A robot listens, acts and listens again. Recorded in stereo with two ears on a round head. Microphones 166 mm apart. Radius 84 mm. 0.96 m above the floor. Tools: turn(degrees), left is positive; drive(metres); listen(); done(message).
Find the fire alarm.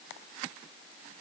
listen()
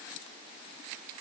listen()
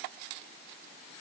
done("I can't make out a fire alarm to turn to.")